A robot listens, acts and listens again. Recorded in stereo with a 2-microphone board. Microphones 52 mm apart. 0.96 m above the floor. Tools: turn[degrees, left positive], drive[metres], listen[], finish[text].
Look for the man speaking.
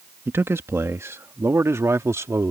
Thought: The man speaking: about 70° right or 110° right.
Action: turn[-70]
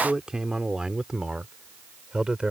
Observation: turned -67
Thought: So it is at 15° right.
Action: turn[-15]
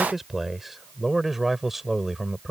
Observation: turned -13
Action: finish[Found it: a man speaking, straight ahead.]